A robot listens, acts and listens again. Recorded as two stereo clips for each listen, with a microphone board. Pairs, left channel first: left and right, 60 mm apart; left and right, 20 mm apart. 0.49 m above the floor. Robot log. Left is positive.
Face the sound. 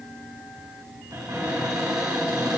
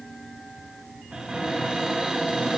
note: The cupboard door: about 75° right or 105° right.
cmd yaw -75
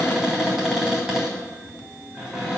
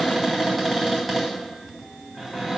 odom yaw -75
note: So it is at 10° right.
cmd yaw -10
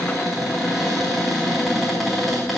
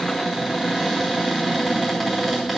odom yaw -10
end: Facing the cupboard door.